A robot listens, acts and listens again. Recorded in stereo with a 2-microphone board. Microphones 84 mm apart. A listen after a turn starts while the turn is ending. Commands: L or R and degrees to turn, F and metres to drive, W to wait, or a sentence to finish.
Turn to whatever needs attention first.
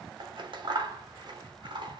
W
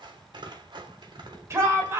R40
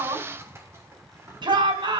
R105
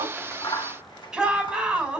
Found it: a shout, straight ahead.